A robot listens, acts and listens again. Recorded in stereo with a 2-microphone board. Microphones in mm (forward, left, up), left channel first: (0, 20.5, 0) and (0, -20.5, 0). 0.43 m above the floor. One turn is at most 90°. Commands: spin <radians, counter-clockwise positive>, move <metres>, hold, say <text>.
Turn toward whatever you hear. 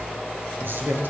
spin -1.13
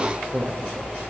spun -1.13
spin -0.87
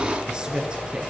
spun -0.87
spin -0.44
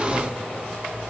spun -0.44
hold
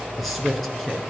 say Facing the man speaking, over 4 m away.